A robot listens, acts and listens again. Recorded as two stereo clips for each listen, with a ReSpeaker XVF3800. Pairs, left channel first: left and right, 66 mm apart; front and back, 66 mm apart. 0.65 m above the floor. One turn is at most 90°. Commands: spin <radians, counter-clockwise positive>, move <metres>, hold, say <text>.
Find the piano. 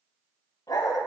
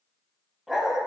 hold
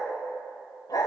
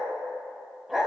hold
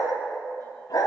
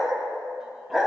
say I can't make out a piano to turn to.